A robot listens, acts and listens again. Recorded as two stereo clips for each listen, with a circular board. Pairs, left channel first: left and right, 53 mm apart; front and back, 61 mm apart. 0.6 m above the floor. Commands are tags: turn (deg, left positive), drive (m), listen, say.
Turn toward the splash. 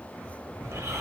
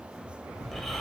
<turn deg="170"/>
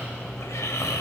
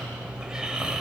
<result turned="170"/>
<say>I heard a splash from this way, but can't make it out now.</say>